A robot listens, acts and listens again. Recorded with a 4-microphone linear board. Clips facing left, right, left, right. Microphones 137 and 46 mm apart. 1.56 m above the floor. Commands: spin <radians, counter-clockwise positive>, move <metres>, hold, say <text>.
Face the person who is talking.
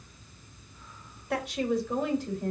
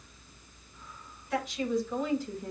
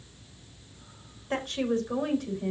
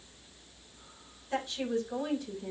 spin 1.22
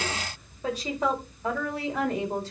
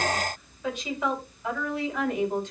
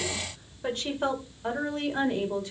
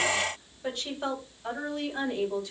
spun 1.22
spin 0.61
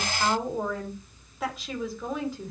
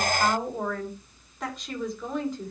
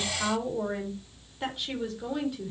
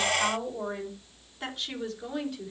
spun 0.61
say Facing the woman speaking.